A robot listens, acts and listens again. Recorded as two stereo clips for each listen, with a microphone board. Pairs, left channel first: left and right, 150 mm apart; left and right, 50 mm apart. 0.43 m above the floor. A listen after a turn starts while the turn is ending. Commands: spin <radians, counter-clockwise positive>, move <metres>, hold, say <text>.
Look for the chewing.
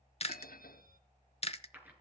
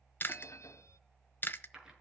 spin 0.70
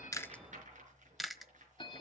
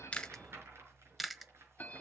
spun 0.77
say Found it: chewing, straight ahead.